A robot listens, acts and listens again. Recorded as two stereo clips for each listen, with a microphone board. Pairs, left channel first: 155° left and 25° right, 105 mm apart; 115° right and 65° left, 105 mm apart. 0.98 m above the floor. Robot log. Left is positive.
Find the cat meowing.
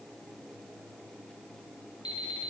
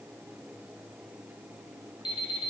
cmd idle
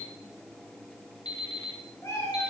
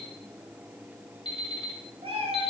note: The cat meowing: 95° left.
cmd yaw +95
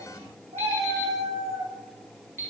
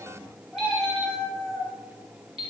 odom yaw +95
note: The cat meowing is now 10° right.
cmd yaw -10
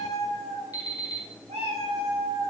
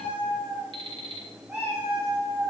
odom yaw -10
end: Facing the cat meowing, over 4 m away.